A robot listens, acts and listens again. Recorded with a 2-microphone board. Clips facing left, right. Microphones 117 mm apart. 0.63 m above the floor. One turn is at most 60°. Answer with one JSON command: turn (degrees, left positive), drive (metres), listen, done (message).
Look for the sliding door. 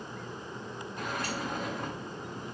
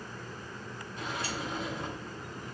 {"turn": 50}
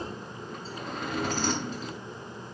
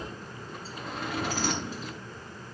{"done": "Found it: a sliding door, straight ahead, over 4 m away."}